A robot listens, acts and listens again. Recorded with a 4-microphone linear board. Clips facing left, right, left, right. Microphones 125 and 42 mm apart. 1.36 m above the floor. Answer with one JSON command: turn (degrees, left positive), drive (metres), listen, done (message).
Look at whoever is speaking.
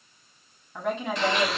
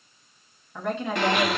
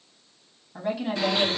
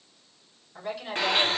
{"turn": 30}
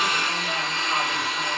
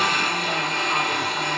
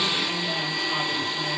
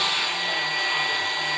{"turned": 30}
{"listen": true}
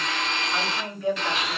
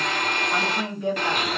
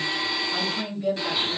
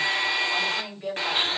{"turn": -25}
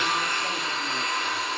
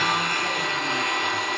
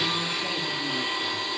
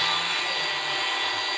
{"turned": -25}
{"listen": true}
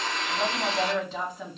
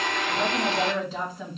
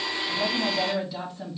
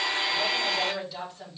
{"done": "Facing the woman speaking."}